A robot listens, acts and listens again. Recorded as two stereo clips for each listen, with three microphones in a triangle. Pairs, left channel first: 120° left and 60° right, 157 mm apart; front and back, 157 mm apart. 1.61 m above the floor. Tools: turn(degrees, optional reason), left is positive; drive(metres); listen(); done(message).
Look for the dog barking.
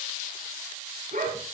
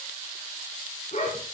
turn(degrees=-40, reason="The dog barking: 40° right.")
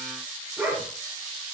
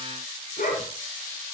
turn(degrees=20, reason="The dog barking is now 20° left.")
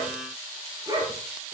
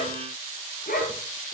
done("Facing the dog barking.")